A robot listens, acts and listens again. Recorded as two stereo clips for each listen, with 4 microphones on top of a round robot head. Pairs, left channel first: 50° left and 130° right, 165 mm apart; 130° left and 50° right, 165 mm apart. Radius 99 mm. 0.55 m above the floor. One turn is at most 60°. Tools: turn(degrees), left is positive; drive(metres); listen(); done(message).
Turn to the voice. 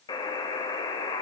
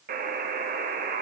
listen()
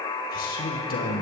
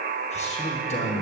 turn(degrees=60)
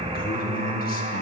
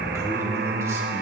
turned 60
turn(degrees=20)
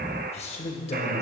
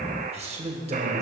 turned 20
done("Found it: a man speaking, straight ahead.")